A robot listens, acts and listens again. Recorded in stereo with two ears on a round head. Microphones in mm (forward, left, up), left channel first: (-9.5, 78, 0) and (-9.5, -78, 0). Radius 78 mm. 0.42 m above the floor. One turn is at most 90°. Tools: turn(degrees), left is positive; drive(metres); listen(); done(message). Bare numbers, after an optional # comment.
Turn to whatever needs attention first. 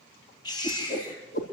# The baby crying: about 25° left or 155° left.
turn(25)
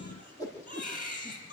# So it is at 130° left.
turn(90)
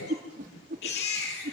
# The baby crying is now 60° left.
turn(60)
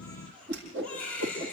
done("Found it: a baby crying, straight ahead, over 4 m away.")